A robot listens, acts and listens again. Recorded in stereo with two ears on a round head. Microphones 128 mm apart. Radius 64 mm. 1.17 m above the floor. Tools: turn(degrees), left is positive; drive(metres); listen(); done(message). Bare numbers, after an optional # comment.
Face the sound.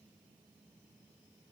listen()
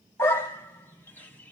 # The dog barking: about 15° left or 165° left.
turn(15)
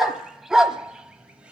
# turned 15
turn(-30)
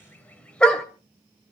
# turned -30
done("Facing the dog barking, 1 to 2 m away.")